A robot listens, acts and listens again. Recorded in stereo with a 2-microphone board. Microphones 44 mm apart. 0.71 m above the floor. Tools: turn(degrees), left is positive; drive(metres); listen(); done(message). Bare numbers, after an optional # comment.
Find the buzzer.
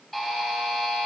turn(30)
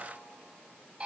# So it is at 25° right.
turn(-25)
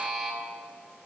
done("Found it: a buzzer, straight ahead.")